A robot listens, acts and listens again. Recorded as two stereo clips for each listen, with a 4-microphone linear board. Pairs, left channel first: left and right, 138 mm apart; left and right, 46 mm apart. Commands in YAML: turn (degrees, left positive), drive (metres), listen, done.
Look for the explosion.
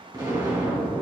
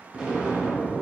turn: -30
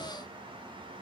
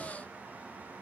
listen: true
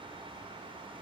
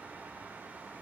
done: "I heard an explosion, but can't make it out now. It was about straight ahead or 120° right."